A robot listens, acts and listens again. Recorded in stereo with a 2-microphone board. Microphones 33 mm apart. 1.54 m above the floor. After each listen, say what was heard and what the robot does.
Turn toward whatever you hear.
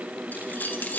The keys jangling: about 65° left or 115° left. Turn 65° left.
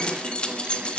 So it is at 35° left. Turn 35° left.
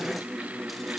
Keep listening.
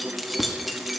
Found it: keys jangling, straight ahead.